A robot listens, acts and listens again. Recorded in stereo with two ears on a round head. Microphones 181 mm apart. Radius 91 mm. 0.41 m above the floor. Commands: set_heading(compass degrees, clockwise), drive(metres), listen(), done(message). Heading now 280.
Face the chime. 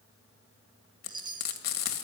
set_heading(300)
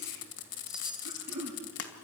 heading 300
listen()
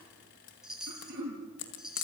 done("Facing the chime.")